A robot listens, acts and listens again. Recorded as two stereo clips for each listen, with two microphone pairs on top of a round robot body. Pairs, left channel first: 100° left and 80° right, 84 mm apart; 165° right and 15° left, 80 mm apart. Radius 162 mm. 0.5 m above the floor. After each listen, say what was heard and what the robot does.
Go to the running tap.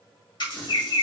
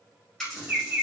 The running tap: 110° left. Turn 110° left.
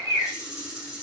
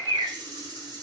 Drive 1.0 m forward.
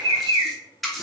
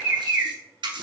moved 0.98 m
The running tap is now 15° left. Turn 15° left.
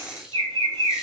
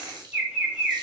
Drive 1.0 m forward.
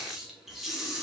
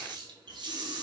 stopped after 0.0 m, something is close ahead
The running tap is now 10° left. Turn 10° left.
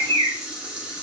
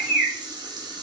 I am next to the running tap.